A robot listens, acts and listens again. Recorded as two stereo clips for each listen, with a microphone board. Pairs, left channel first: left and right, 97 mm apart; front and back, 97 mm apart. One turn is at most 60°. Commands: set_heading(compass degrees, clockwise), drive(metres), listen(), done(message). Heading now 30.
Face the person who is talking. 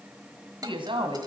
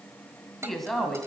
set_heading(90)
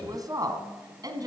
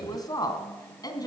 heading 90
set_heading(135)
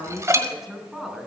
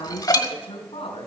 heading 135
done("Found it: a woman speaking, straight ahead.")